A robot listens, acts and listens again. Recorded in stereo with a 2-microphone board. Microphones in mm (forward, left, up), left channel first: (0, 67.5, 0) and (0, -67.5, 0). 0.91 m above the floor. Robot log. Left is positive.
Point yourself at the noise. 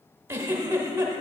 note: The giggle: about 20° right or 160° right.
cmd yaw -20
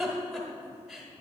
end: Facing the giggle.